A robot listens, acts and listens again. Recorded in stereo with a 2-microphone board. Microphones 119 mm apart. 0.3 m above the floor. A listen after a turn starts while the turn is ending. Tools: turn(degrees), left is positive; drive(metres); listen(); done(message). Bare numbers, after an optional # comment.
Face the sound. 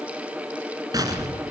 # The explosion: about 30° right or 150° right.
turn(-30)
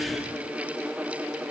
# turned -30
listen()
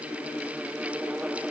done("I heard an explosion, but can't make it out now. It was about straight ahead or 120° right.")